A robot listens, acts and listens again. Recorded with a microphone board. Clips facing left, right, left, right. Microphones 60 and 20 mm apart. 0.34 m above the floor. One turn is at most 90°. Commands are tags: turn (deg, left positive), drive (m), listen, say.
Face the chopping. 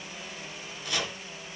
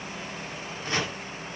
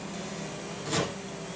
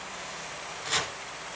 <turn deg="-30"/>
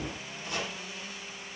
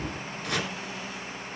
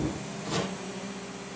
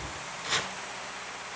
<turn deg="-90"/>
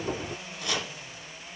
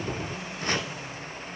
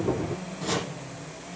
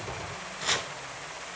<turn deg="-45"/>
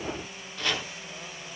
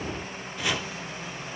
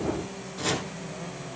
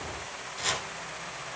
<turn deg="-10"/>
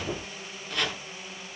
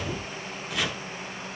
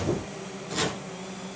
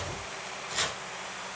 <say>Facing the chopping, 1 to 2 m away.</say>